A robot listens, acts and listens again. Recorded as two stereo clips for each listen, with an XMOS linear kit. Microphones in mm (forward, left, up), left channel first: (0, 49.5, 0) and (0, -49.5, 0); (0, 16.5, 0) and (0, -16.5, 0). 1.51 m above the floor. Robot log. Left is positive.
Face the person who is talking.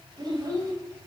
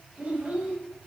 note: The child speaking: about 40° right or 140° right.
cmd yaw -40
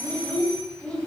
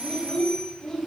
note: So it is at 10° left.
cmd yaw +10
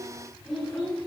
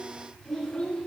note: The child speaking is now 10° left.
cmd yaw +10
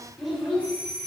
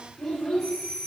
end: Facing the child speaking, over 4 m away.